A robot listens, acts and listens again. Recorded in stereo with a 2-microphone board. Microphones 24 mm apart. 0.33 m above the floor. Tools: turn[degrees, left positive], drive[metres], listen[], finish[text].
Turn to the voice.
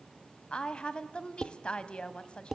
Thought: The woman speaking: about 40° left or 140° left.
Action: turn[40]
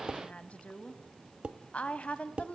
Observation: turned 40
Thought: So it is at 95° left.
Action: turn[95]
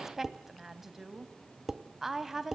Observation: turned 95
Thought: The woman speaking is now 15° right.
Action: turn[-15]
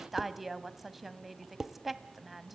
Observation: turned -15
Action: finish[Facing the woman speaking, 1 to 2 m away.]